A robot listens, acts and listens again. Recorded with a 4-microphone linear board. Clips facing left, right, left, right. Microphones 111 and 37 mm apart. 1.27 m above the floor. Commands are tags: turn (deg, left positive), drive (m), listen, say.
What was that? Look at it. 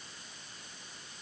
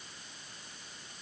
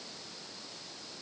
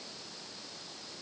<listen/>
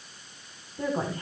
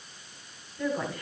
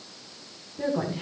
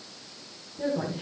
<turn deg="30"/>
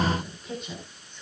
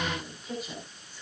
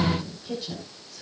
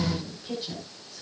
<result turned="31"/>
<say>Facing the woman speaking.</say>